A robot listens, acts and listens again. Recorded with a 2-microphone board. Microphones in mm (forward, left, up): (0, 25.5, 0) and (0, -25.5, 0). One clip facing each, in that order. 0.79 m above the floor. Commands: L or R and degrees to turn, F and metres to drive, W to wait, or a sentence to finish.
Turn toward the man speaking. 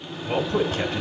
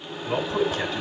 L55
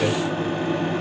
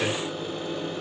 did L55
Found it: a man speaking, straight ahead.